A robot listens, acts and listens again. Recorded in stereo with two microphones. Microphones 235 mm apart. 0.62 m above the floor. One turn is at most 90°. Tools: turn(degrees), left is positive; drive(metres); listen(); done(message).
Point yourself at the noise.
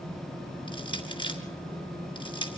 turn(degrees=20)
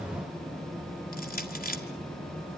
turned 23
turn(degrees=90)
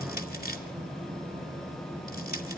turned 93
turn(degrees=45)
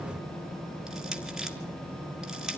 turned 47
done("Found it: crushing, straight ahead.")